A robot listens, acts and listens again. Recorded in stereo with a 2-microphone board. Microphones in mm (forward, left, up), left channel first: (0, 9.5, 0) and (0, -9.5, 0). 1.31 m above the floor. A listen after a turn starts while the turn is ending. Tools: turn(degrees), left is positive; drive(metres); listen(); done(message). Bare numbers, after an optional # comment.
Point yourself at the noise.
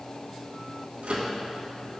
turn(-90)
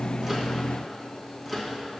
done("Facing the microwave.")